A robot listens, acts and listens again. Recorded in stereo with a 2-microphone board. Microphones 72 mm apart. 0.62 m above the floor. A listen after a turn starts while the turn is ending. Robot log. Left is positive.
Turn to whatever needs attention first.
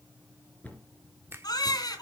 note: The baby crying: about 65° left or 115° left.
cmd yaw +65
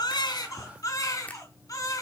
note: So it is at 50° left.
cmd yaw +50
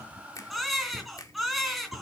end: Facing the baby crying.